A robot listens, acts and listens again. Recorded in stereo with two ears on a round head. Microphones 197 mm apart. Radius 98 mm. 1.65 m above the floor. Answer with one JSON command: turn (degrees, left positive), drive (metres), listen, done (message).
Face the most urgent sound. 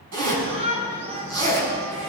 {"turn": -25}
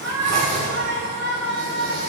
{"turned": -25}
{"turn": -130}
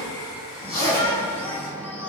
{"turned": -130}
{"turn": 10}
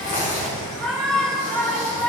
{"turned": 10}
{"done": "Found it: a shout, straight ahead."}